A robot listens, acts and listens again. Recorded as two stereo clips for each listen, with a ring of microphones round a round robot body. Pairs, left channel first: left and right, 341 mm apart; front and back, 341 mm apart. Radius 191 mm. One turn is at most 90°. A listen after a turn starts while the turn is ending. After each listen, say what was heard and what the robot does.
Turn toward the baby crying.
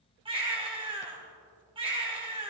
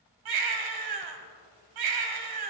The baby crying: 165° right. Turn 90° right.
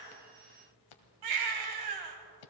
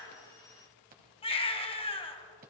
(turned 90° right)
The baby crying is now 75° right. Turn 75° right.
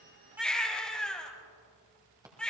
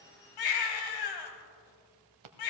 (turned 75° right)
Found it: a baby crying, straight ahead, 1 to 2 m away.